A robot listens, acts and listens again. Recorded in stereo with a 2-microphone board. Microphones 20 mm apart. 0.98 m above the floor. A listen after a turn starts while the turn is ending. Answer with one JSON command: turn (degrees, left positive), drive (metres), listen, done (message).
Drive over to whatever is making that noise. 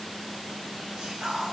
{"turn": -60}
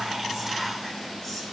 {"listen": true}
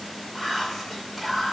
{"drive": 1.0}
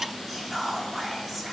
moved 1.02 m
{"drive": 1.0}
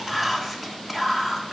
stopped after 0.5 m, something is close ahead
{"done": "Arrived at the whispering, straight ahead."}